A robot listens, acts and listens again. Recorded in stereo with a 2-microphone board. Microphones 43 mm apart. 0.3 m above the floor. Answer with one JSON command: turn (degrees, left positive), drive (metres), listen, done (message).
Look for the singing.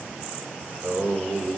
{"turn": -70}
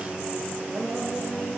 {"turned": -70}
{"turn": -25}
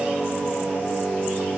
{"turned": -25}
{"turn": 10}
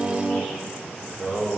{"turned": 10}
{"turn": 10}
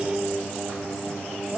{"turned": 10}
{"done": "Found it: singing, straight ahead."}